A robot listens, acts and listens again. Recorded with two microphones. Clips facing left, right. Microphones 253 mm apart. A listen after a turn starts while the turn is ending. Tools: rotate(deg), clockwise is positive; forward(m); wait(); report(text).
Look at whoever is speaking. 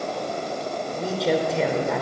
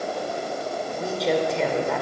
rotate(-30)
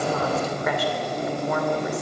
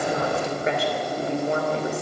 rotate(30)
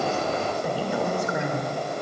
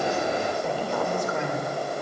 rotate(-10)
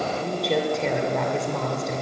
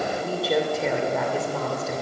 report("Facing the woman speaking, 2 to 4 m away.")